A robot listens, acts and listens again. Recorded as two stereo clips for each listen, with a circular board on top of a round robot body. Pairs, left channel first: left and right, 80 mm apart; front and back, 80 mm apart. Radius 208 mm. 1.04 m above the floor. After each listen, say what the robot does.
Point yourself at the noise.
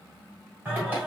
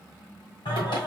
Turn 20° right.
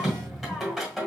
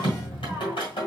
Found it: singing, straight ahead, 1 to 2 m away.